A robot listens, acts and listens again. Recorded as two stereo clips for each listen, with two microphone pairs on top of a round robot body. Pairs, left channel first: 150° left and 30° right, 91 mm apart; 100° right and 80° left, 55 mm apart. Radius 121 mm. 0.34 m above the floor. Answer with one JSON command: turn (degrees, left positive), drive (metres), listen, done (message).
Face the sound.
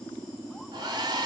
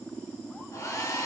{"turn": -70}
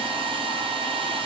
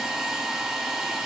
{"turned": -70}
{"done": "Facing the hair dryer, under 1 m away."}